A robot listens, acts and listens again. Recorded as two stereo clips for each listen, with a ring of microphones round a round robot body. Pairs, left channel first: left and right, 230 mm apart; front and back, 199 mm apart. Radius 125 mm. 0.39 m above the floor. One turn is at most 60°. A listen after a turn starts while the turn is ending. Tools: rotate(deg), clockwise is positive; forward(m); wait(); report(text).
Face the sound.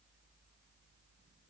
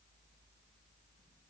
wait()
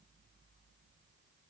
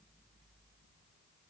wait()
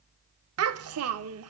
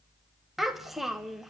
rotate(60)
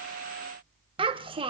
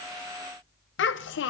rotate(25)
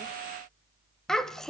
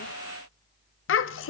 report("Facing the child speaking.")